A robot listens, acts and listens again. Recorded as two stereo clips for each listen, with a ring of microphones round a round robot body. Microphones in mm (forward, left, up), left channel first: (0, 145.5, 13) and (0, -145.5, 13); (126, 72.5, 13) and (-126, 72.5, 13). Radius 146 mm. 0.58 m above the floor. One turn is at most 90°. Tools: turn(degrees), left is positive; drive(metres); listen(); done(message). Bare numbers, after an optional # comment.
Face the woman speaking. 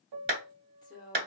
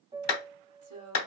# The woman speaking: 165° left.
turn(90)
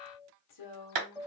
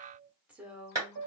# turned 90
# The woman speaking is now 95° left.
turn(90)
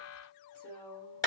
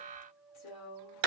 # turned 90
done("Facing the woman speaking, 1 to 2 m away.")